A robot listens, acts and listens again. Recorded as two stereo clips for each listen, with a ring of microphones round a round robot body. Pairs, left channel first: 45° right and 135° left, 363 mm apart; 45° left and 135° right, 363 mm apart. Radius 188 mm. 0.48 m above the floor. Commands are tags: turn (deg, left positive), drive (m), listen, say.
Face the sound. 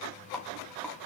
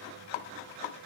<listen/>
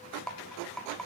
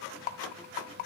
<turn deg="45"/>
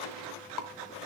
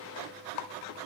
<say>Facing the rattle, 1 to 2 m away.</say>